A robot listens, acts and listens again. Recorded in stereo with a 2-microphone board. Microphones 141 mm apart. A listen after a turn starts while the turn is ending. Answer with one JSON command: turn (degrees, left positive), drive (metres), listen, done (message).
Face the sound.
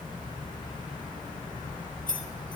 {"turn": 70}
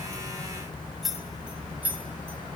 {"turn": -15}
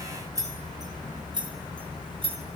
{"turn": -35}
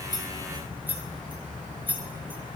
{"turn": -15}
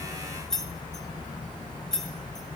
{"done": "Found it: keys jangling, straight ahead, 1 to 2 m away."}